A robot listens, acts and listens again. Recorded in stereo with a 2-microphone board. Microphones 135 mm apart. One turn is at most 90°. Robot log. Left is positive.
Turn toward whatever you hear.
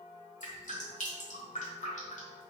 note: The dripping: about 75° left or 105° left.
cmd yaw +75
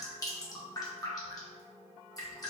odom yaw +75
note: So it is at 30° left.
cmd yaw +30
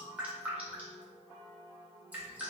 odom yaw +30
note: The dripping is now 10° right.
cmd yaw -10
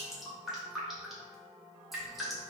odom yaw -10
end: Found it: dripping, straight ahead, under 1 m away.